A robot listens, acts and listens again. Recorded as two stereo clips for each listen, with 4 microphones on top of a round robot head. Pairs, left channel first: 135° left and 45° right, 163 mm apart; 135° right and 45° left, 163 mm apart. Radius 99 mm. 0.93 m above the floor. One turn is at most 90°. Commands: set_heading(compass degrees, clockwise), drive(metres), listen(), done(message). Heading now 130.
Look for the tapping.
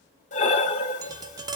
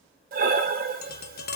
set_heading(220)
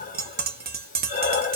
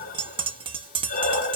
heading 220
set_heading(235)
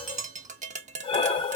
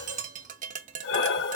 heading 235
done("Facing the tapping.")